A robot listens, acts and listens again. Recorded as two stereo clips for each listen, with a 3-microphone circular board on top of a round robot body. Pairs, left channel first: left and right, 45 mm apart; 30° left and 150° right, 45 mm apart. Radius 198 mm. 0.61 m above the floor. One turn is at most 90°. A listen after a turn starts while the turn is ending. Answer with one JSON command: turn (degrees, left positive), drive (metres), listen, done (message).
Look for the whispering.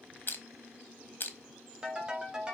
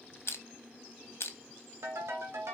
{"listen": true}
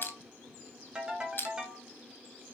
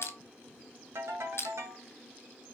{"listen": true}
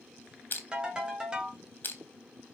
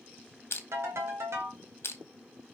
{"done": "I can't make out whispering, only crushing and a ringtone."}